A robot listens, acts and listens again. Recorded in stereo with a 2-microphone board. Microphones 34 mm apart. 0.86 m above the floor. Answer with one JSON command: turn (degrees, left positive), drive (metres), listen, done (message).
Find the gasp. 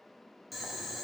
{"listen": true}
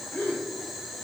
{"turn": 60}
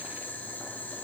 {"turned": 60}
{"listen": true}
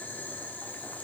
{"done": "I heard a gasp, but can't make it out now. It was about straight ahead or 60° left."}